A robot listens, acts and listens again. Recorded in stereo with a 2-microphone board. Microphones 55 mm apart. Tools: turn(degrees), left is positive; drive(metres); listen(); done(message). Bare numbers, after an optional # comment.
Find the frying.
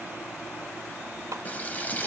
# The frying: about 30° left or 150° left.
turn(30)
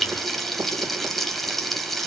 done("Facing the frying.")